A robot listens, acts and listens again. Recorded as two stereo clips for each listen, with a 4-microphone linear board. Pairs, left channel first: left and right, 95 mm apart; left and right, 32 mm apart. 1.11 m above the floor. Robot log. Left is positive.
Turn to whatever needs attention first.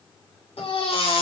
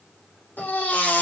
cmd yaw +90
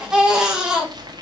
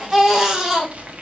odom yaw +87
end: Facing the baby crying.